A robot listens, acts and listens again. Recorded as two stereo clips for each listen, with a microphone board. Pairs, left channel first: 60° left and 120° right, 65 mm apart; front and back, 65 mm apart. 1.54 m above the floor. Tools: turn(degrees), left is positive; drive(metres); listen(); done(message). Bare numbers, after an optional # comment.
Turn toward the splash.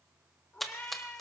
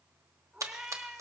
# The splash: 150° left.
turn(150)
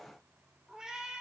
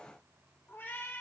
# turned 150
done("I heard a splash from this way, but can't make it out now.")